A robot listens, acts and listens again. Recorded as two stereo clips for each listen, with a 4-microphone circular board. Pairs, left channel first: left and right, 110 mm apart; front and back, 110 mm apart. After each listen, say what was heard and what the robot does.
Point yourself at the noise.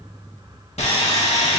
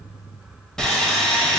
The sawing: 85° left. Turn 85° left.
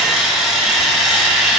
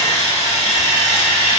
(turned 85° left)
Found it: sawing, straight ahead.